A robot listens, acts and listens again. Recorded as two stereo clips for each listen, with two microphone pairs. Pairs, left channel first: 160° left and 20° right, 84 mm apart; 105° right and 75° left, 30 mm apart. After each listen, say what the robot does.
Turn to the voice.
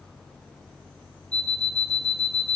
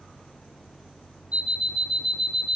Keep listening.
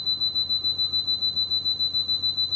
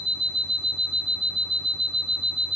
Keep listening.
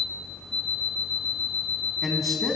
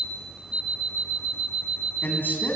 Turn 110° right.
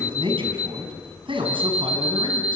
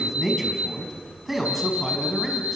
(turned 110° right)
Turn 10° right.
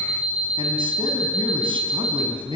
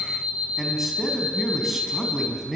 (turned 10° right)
Facing the man speaking.